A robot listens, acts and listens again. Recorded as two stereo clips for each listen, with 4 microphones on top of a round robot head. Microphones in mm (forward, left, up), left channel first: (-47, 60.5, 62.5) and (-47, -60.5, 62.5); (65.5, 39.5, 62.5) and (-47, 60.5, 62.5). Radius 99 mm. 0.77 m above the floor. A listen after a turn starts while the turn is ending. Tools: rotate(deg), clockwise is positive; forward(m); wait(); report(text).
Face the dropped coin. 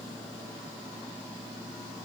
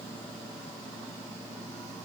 wait()
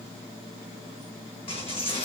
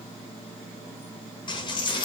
rotate(-35)
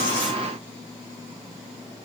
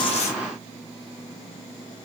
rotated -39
report("Facing where the dropped coin came from. I can't hear it now.")